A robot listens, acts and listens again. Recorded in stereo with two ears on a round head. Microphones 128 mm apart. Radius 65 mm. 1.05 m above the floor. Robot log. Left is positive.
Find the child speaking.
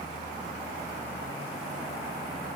cmd idle
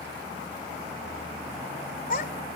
note: The child speaking: about 60° left or 120° left.
cmd yaw +60
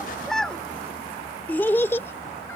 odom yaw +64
note: So it is at 20° left.
cmd yaw +20
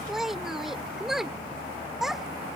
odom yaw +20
end: Facing the child speaking.